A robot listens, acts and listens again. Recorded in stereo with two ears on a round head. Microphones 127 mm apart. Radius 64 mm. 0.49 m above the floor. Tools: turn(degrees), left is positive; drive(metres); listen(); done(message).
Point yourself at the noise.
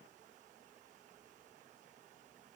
listen()
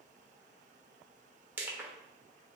turn(degrees=-30)
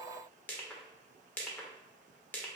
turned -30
turn(degrees=15)
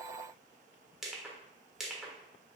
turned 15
done("Found it: crushing, straight ahead, under 1 m away.")